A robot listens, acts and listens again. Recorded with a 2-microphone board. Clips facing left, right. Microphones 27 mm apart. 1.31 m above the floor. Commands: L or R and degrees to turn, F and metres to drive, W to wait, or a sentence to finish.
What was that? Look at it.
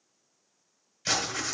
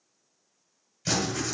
L15
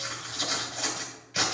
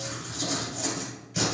L150
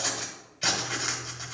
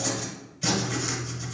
L35
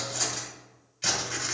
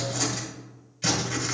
Facing the writing.